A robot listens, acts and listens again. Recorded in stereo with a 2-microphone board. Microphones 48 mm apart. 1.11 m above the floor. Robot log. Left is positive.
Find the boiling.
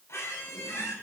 cmd idle
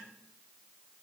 cmd idle
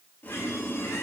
note: The boiling: about 45° left or 135° left.
cmd yaw +45
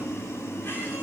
note: So it is at 95° left.
cmd yaw +95
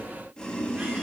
note: The boiling is now 15° left.
cmd yaw +15
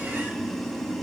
end: Found it: boiling, straight ahead, 1 to 2 m away.